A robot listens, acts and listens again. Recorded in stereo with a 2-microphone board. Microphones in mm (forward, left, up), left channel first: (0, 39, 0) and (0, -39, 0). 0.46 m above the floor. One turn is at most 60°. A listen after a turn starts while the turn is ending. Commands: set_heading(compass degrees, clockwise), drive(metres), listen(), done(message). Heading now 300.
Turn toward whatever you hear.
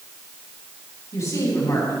set_heading(255)
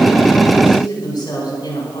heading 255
set_heading(195)
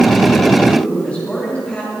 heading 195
set_heading(180)
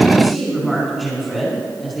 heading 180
done("Facing the woman speaking, over 4 m away.")